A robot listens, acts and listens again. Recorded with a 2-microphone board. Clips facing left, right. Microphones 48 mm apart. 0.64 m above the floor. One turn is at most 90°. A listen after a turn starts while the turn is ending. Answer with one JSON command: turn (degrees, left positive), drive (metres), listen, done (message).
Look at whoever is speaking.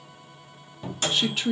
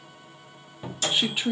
{"turn": -15}
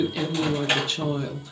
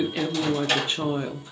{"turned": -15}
{"turn": -90}
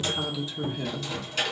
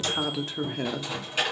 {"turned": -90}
{"turn": -90}
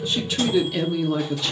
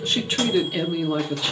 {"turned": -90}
{"turn": -15}
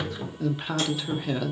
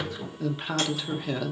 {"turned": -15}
{"done": "Found it: a woman speaking, straight ahead, under 1 m away."}